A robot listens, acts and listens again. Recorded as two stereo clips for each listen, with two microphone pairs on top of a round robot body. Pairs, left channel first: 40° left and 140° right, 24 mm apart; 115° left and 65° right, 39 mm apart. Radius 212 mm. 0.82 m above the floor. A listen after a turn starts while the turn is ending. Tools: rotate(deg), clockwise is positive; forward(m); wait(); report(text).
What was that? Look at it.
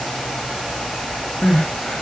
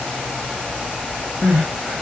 report("Facing the crying.")